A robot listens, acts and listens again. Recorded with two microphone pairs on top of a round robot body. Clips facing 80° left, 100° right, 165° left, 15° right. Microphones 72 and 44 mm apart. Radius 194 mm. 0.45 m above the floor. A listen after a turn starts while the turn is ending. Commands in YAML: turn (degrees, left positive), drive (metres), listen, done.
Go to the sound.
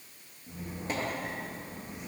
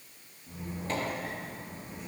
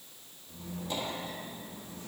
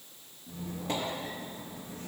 drive: 1.0
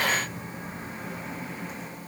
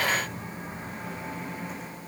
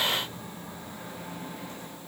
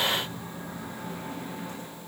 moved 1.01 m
drive: 1.0
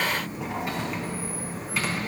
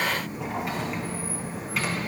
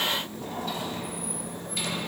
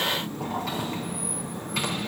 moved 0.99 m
turn: -10
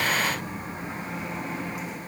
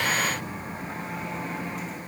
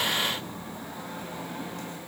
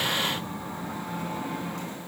drive: 1.0
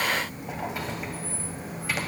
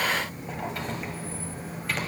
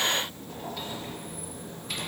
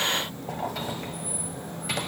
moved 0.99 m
drive: 1.0
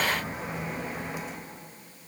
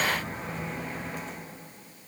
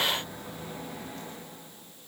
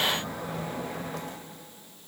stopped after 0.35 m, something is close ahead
done: "Arrived at the squeak, straight ahead."